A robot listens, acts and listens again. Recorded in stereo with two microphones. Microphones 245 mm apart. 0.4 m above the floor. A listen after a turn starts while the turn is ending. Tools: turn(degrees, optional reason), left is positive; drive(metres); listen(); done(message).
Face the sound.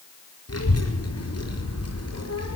turn(degrees=75, reason="The child speaking: about 75° left or 105° left.")
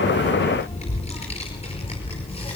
turn(degrees=20, reason="So it is at 20° left.")
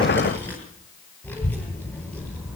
done("Facing the child speaking, over 4 m away.")